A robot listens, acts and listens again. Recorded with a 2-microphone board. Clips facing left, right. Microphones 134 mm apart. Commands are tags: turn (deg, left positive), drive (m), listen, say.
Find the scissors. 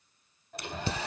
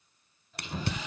<turn deg="-90"/>
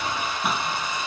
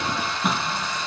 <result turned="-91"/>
<say>Found it: scissors, straight ahead.</say>